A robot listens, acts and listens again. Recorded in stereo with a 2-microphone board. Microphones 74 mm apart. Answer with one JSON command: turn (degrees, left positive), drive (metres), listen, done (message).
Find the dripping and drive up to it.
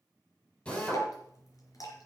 {"turn": 55}
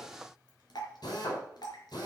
{"turn": 70}
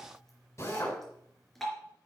{"drive": 1.0}
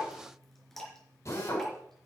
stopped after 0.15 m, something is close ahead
{"done": "Something is in my way. I am facing the dripping but have not reached it."}